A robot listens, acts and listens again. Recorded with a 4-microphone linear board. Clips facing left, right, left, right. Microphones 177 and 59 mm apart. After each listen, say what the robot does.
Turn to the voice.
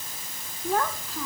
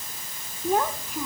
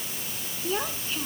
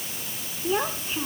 Turn 20° right.
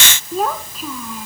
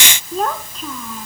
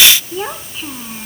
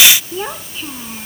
Found it: a child speaking, straight ahead.